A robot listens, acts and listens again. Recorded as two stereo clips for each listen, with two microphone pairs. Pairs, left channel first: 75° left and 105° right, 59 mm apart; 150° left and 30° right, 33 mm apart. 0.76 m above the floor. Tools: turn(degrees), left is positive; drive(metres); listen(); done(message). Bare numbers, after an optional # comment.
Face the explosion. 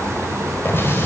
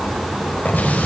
# The explosion: 125° left.
turn(125)
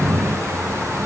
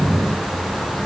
done("Facing where the explosion came from. I can't hear it now.")